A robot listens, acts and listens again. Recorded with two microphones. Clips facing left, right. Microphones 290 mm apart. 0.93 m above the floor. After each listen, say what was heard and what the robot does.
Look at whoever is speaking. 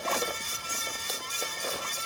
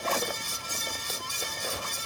Keep listening.
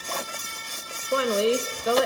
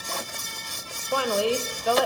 The woman speaking: about 25° left or 155° left. Turn 25° left.
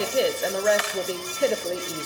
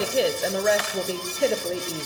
Facing the woman speaking, under 1 m away.